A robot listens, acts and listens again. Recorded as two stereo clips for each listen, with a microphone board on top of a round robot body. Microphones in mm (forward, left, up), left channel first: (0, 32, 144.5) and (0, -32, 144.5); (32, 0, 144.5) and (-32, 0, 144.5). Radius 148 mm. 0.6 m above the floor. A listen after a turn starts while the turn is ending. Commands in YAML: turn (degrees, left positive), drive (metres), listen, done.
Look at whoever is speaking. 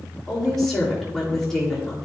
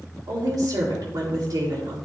turn: 175
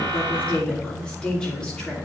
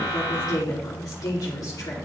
turn: 10
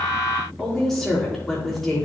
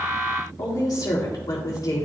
done: "Facing the woman speaking."